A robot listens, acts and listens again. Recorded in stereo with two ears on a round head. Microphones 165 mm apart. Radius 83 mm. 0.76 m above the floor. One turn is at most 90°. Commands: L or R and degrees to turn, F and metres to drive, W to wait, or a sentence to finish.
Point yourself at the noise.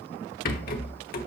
L45
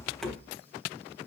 Facing the rattle, 1 to 2 m away.